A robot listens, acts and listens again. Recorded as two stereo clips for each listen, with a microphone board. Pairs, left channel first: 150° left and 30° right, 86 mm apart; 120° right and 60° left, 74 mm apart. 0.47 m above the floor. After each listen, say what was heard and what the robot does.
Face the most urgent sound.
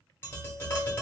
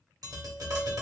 Keep listening.
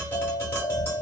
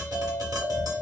The alarm: 35° left. Turn 35° left.
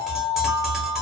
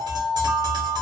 Facing the alarm.